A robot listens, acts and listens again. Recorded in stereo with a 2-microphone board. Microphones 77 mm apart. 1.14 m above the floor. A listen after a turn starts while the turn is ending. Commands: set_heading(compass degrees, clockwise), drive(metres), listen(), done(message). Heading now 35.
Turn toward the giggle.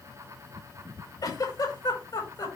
set_heading(335)
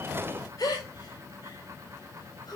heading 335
set_heading(275)
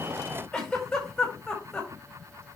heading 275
set_heading(265)
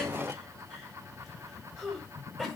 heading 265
done("Found it: a giggle, straight ahead.")